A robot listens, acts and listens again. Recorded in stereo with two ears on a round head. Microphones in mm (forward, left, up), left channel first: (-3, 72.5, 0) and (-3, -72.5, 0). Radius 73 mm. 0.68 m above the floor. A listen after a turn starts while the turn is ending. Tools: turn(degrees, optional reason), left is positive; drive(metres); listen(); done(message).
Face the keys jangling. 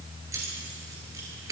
turn(degrees=-20, reason="The keys jangling: about 20° right or 160° right.")
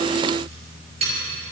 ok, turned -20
turn(degrees=-40, reason="The keys jangling: about 40° right or 140° right.")
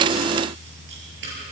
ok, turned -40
listen()
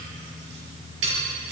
turn(degrees=-95, reason="So it is at 95° right.")
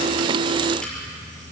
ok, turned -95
listen()
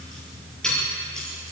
done("Facing the keys jangling.")